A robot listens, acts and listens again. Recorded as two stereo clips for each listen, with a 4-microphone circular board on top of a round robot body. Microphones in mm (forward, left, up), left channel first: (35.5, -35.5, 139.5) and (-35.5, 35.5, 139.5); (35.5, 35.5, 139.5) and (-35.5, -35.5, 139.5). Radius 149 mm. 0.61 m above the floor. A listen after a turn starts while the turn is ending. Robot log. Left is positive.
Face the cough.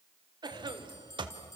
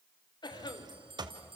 note: The cough: 90° left.
cmd yaw +90
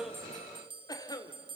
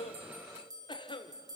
end: Found it: a cough, straight ahead, 2 to 4 m away.